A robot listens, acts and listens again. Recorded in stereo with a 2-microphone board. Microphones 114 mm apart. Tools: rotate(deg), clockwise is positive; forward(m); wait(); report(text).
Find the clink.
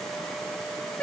wait()
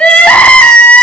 wait()
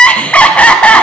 report("I can't make out a clink to turn to.")